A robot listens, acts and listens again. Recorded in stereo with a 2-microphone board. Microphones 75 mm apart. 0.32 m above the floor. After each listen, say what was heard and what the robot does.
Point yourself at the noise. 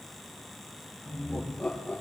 Turn 30° left.
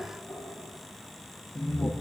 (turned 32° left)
So it is at 125° left. Turn 125° left.
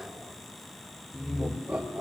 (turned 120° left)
The laughter is now 10° right. Turn 10° right.
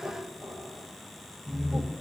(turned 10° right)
Found it: laughter, straight ahead.